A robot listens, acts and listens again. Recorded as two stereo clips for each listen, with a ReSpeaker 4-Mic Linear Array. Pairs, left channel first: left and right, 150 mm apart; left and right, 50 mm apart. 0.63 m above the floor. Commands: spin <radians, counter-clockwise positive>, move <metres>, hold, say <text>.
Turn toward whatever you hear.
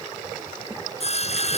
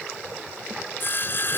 spin 0.79
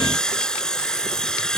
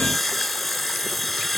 say Facing the sawing.